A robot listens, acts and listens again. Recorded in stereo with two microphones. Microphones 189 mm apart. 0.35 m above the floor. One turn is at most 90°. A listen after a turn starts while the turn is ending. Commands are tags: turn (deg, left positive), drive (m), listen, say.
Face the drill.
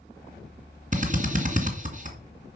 <turn deg="-40"/>
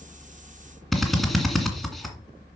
<say>Facing the drill, 2 to 4 m away.</say>